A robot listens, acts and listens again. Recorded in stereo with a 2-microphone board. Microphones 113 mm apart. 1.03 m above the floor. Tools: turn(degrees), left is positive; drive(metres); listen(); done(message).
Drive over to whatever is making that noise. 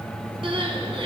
turn(degrees=-50)
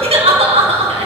turn(degrees=-70)
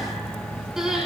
drive(metres=1.0)
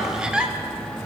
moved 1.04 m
turn(degrees=-10)
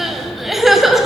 drive(metres=1.0)
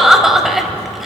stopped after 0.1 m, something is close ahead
done("I am next to the crying.")